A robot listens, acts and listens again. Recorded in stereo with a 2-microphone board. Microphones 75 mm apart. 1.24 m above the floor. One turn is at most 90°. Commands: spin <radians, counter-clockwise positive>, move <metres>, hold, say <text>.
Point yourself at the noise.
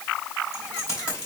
spin 0.61
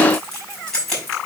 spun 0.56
say Found it: keys jangling, straight ahead, over 4 m away.